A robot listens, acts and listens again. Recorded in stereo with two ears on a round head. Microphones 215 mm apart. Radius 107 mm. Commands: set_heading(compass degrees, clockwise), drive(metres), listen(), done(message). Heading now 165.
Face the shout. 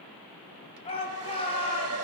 set_heading(140)
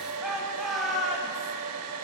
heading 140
done("Found it: a shout, straight ahead, 2 to 4 m away.")